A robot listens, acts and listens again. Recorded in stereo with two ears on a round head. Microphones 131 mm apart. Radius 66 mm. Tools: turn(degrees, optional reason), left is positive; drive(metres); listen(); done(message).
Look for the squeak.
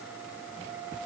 listen()
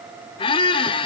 turn(degrees=35, reason="The squeak: about 35° left or 145° left.")
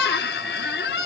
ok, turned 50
turn(degrees=95, reason="So it is at 95° left.")
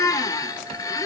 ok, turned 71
turn(degrees=25, reason="The squeak is now 25° left.")
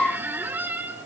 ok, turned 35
turn(degrees=-10, reason="The squeak is now 10° right.")
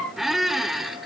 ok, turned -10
done("Facing the squeak.")